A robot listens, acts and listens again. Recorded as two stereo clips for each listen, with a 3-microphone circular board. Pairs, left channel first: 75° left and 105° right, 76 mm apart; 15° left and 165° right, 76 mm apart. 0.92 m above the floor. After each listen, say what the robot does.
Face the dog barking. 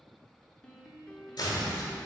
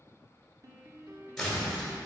Keep listening.
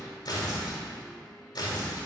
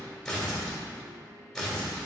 Keep listening.
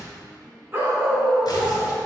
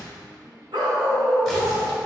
Turn 175° right.
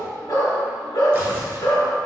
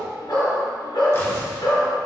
Turn 40° left.
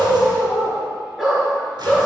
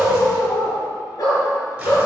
Turn 15° right.
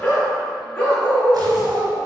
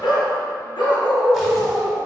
Facing the dog barking.